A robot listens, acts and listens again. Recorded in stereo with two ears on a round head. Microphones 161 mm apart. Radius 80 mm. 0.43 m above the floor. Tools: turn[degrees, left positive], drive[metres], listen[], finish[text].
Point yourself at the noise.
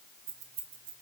Thought: The keys jangling: about 55° right or 125° right.
Action: turn[-55]
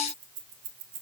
Thought: So it is at 60° right.
Action: turn[-60]
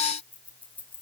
Thought: The keys jangling is now 10° left.
Action: turn[10]
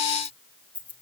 Thought: The keys jangling is now 10° left.
Action: turn[10]
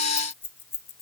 Thought: The keys jangling is now 15° left.
Action: turn[15]
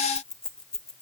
Action: finish[Found it: keys jangling, straight ahead.]